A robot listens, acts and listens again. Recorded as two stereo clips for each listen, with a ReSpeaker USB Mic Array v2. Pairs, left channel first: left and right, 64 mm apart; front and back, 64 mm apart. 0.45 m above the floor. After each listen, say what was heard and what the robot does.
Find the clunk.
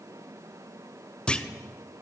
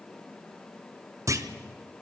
The clunk: 160° left. Turn 160° left.
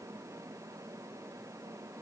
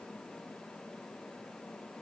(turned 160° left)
I heard a clunk from this way, but can't make it out now.